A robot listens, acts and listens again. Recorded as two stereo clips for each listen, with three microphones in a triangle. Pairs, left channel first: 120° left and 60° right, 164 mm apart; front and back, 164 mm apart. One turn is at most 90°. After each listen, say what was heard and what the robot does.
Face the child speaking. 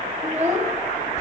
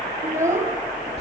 The child speaking: 105° right. Turn 90° right.
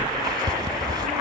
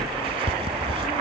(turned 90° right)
Nothing new. It was at 15° right. Turn 15° right.
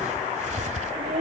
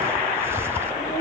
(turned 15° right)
Keep listening.
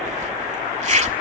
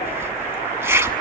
Facing where the child speaking came from. I can't hear it now.